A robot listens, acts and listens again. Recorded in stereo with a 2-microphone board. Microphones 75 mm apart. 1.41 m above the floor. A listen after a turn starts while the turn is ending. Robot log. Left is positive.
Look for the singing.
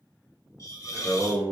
note: The singing: about 25° left or 155° left.
cmd yaw +25
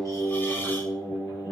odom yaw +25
note: The singing: about 40° left or 140° left.
cmd yaw +40
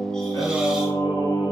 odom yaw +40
note: So it is at 115° left.
cmd yaw +115
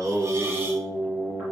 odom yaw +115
note: The singing is now 25° right.
cmd yaw -25
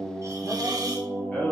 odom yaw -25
end: Found it: singing, straight ahead.